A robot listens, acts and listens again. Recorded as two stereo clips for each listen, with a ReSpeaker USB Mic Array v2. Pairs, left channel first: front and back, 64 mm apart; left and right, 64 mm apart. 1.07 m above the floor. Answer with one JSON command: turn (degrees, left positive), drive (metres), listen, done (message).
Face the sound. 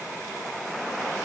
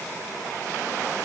{"listen": true}
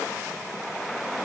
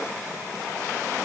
{"listen": true}
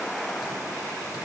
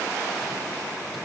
{"done": "I can't make out anything."}